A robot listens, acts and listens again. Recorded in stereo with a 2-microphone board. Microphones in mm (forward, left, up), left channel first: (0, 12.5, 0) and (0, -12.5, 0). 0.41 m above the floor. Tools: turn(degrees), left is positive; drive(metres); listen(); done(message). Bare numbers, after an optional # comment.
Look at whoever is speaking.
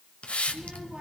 # The child speaking: about 35° right or 145° right.
turn(-35)
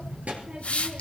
# So it is at 110° right.
turn(-110)
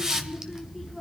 done("Found it: a child speaking, straight ahead, 2 to 4 m away.")